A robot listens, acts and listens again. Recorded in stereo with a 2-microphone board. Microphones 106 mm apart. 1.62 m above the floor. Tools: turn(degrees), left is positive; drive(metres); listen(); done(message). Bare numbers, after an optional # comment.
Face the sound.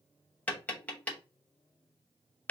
turn(30)
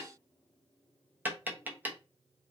# So it is at 15° right.
turn(-15)
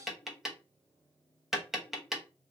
done("Found it: tapping, straight ahead.")